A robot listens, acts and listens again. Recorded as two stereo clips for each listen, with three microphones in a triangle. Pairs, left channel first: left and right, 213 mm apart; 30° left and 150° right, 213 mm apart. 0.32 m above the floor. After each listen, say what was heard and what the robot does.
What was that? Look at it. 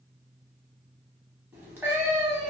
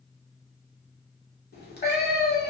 The cat meowing: 10° right. Turn 10° right.
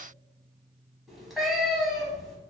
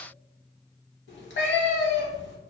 Facing the cat meowing.